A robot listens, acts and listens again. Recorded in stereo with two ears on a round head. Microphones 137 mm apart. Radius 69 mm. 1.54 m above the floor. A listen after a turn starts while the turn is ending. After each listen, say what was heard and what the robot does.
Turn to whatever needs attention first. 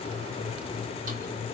Keep listening.
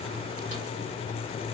Keep listening.
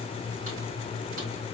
I can't make out anything urgent to turn to.